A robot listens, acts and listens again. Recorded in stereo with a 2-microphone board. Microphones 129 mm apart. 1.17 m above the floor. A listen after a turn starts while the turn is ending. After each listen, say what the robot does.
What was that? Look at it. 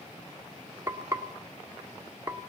Turn 20° right.
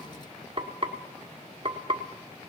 Turn 135° right.
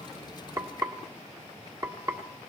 Turn 25° right.
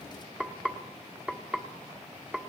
Turn 10° right.
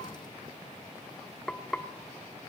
Facing the frying.